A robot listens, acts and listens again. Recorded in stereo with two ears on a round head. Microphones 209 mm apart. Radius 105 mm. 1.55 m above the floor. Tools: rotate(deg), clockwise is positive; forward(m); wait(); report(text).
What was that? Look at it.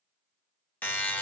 rotate(-30)
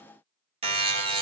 rotate(25)
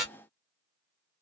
report("Facing the buzzer.")